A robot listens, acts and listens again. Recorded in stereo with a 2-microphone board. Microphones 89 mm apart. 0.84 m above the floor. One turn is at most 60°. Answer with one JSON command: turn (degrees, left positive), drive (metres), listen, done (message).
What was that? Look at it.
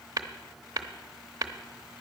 {"turn": -40}
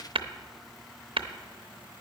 {"turn": -60}
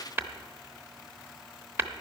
{"turn": -25}
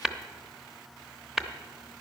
{"done": "Facing the tapping."}